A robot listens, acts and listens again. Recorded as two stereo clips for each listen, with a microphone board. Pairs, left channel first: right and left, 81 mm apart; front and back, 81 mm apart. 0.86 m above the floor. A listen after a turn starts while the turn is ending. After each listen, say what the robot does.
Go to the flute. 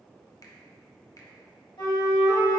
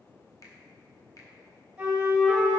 Turn 100° right.
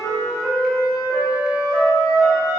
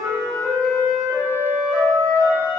Turn 50° right.
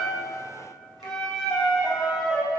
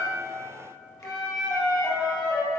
Drive 1.0 m forward.
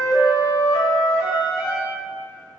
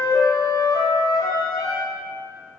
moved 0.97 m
Drive 1.0 m forward.
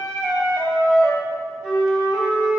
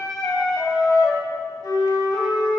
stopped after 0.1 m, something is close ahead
Turn 10° left.
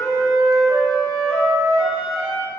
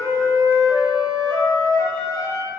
Arrived at the flute, straight ahead.